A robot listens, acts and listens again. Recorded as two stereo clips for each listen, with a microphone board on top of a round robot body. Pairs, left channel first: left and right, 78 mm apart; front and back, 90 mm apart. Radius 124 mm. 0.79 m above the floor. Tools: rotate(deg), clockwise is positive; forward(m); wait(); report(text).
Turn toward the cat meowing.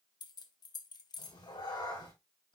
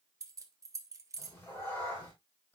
rotate(-70)
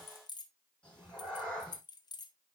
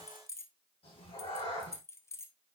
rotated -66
rotate(-15)
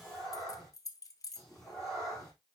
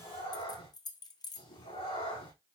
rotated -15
report("Facing the cat meowing.")